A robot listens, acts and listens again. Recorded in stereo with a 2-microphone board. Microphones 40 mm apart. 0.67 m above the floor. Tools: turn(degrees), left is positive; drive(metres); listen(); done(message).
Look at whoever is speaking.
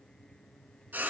listen()
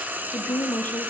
turn(degrees=55)
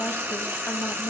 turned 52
turn(degrees=40)
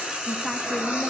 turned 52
turn(degrees=-10)
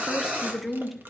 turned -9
done("Facing the woman speaking, under 1 m away.")